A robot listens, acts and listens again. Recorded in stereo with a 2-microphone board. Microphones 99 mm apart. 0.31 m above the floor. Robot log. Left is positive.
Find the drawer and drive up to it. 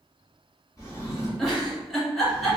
note: The drawer: about 30° left or 150° left.
cmd yaw +30
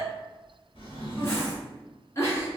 note: So it is at 115° left.
cmd yaw +115
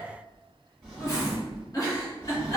cmd fwd 1.0
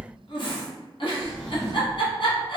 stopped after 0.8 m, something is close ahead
end: I am next to the drawer.